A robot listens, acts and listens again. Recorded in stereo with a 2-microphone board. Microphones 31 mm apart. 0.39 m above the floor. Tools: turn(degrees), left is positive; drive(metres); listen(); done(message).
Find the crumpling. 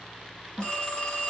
listen()
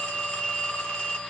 listen()
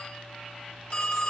done("I can't make out crumpling to turn to.")